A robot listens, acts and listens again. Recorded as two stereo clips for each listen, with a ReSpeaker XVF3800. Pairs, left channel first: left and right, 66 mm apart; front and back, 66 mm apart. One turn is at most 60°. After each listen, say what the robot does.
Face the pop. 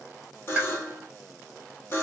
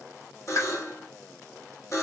Turn 25° right.
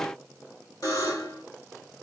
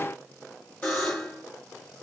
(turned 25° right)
I heard a pop from this way, but can't make it out now.